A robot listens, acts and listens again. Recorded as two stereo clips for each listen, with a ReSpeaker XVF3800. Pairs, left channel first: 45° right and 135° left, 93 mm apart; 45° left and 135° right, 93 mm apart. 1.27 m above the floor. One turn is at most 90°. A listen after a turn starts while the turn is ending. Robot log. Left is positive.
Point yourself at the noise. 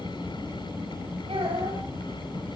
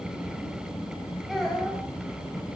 note: The child speaking: 135° left.
cmd yaw +90
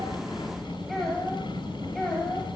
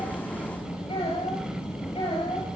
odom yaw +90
note: The child speaking is now 40° left.
cmd yaw +40
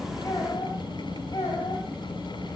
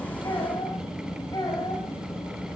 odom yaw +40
end: Facing the child speaking.